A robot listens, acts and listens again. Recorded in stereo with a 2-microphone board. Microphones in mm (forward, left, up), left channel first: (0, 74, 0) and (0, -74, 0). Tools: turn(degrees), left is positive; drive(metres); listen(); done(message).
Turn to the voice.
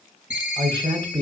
turn(degrees=-25)
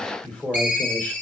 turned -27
turn(degrees=10)
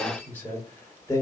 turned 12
turn(degrees=20)
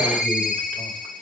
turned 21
listen()
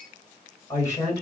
turn(degrees=25)
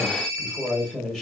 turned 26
done("Found it: a man speaking, straight ahead, 2 to 4 m away.")